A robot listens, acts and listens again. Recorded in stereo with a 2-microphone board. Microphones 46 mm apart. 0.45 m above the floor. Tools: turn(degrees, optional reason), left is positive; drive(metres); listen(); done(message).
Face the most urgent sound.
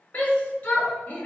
turn(degrees=30, reason="The shout: about 30° left or 150° left.")
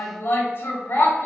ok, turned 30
turn(degrees=115, reason="So it is at 115° left.")
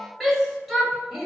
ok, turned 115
done("Facing the shout, 1 to 2 m away.")